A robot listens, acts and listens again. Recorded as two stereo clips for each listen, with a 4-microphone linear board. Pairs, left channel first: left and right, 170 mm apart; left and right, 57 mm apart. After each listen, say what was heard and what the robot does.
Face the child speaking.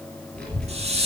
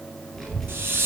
Turn 30° left.
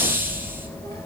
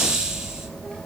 So it is at 160° left. Turn 160° left.
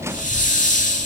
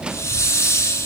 The child speaking is now 35° left. Turn 35° left.
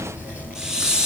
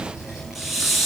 Facing the child speaking.